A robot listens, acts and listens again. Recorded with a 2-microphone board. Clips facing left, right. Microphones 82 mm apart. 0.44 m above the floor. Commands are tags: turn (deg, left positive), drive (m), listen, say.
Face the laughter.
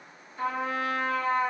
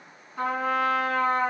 <listen/>
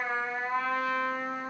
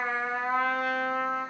<listen/>
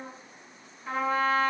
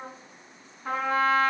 <say>I can't make out laughter, only a trumpet.</say>